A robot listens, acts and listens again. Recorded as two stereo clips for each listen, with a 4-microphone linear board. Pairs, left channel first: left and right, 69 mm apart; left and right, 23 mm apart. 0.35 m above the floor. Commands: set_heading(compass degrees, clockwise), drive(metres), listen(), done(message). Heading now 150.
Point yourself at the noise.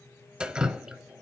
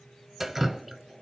set_heading(180)
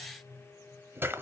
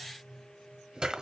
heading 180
set_heading(315)
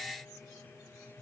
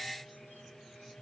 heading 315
listen()
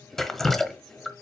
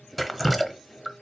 done("Found it: dripping, straight ahead.")